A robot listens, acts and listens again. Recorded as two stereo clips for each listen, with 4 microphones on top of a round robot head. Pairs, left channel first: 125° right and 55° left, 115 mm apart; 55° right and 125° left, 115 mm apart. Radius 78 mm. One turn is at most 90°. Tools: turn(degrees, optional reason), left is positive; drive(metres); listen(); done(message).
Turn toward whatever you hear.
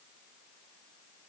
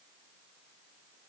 listen()
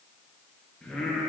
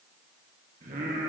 turn(degrees=90, reason="The singing: 145° left.")
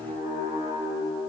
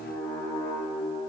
done("Found it: singing, straight ahead, 2 to 4 m away.")